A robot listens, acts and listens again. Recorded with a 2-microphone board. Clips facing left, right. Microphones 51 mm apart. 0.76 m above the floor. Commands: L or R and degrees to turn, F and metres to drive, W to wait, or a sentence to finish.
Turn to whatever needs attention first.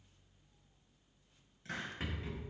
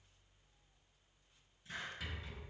W
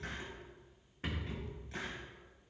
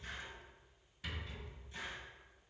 W
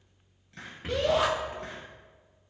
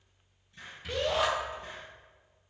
L30
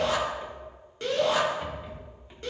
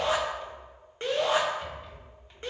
R30
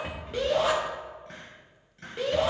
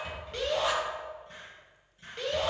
Facing the shout.